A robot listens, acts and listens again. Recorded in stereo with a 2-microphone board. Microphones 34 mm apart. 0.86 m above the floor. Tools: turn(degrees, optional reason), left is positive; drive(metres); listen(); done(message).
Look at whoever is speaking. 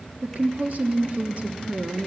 turn(degrees=-50, reason="The woman speaking: about 50° right or 130° right.")
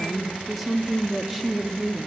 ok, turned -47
done("Facing the woman speaking, 1 to 2 m away.")